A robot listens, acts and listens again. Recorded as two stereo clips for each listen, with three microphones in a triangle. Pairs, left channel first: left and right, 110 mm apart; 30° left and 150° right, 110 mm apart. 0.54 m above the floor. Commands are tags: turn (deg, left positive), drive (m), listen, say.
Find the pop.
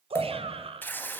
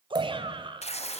<turn deg="160"/>
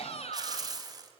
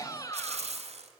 <say>I heard a pop from this way, but can't make it out now.</say>